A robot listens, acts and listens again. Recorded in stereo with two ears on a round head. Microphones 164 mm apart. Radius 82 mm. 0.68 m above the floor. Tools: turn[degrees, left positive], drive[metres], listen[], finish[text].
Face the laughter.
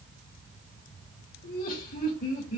Thought: The laughter: about 45° left or 135° left.
Action: turn[45]
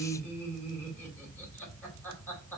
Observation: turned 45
Thought: So it is at 10° left.
Action: turn[10]
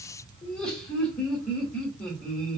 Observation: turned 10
Action: finish[Found it: laughter, straight ahead.]